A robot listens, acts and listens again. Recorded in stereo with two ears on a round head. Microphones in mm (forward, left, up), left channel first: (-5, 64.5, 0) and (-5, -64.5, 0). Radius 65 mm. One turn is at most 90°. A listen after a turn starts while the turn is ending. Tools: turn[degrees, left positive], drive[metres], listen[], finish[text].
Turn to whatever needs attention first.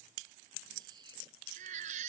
Thought: The baby crying: about 55° right or 125° right.
Action: turn[-55]
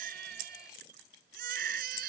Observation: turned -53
Thought: So it is at 70° right.
Action: turn[-70]
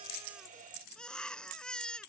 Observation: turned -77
Action: finish[Found it: a baby crying, straight ahead.]